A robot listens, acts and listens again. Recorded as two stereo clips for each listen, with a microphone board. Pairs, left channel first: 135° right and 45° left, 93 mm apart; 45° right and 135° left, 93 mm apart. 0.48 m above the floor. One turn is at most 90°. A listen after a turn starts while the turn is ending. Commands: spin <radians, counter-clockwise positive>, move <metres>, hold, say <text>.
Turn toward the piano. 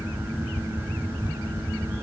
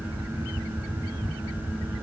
hold
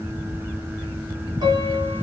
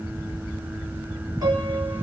spin 1.48
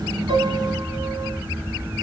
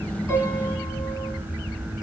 hold
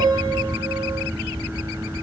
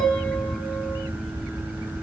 say Facing the piano, 2 to 4 m away.